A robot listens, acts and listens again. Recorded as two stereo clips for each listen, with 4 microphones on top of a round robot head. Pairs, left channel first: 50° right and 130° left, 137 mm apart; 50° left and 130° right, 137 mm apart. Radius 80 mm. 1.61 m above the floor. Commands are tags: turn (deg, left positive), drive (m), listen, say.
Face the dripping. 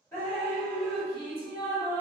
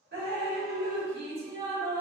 <turn deg="-120"/>
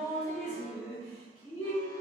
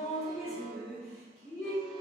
<say>Found it: dripping, straight ahead.</say>